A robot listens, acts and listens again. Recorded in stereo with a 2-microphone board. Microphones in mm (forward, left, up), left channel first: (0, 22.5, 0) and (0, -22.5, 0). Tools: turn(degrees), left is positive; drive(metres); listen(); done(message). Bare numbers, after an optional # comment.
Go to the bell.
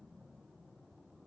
listen()
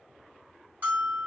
# The bell: about 50° right or 130° right.
turn(-50)
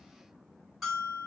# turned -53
drive(1.0)
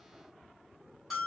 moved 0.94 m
drive(1.0)
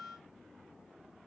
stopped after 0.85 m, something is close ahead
done("I am next to the bell.")